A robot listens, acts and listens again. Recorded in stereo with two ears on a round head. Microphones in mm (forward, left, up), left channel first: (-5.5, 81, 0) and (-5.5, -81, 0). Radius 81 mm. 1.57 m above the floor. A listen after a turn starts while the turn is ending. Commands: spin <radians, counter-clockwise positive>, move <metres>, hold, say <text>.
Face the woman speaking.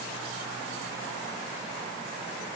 hold
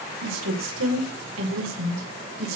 spin -1.57
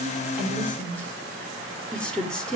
say Facing the woman speaking.